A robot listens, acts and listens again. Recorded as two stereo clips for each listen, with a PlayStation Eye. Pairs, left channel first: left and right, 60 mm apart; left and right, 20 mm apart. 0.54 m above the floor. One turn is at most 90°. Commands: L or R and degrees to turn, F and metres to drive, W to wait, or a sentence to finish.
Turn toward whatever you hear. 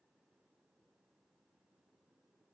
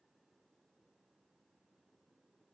W
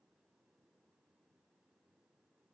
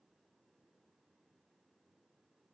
W
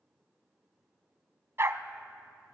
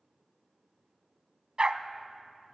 R45
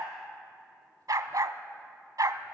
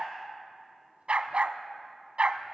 R90
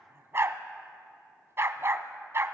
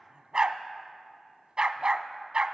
R45
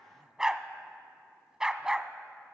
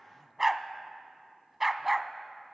R10
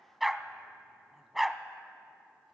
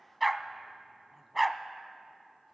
Found it: a dog barking, straight ahead.